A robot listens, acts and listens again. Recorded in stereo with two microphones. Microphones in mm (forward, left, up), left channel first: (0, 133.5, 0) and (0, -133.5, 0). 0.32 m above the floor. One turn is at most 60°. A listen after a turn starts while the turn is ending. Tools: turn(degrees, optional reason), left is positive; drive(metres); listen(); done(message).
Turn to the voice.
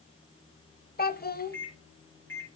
turn(degrees=35, reason="The child speaking: about 35° left or 145° left.")
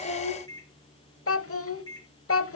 turn(degrees=60, reason="So it is at 100° left.")
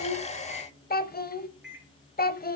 turn(degrees=45, reason="The child speaking is now 45° left.")
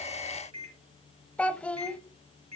done("Facing the child speaking.")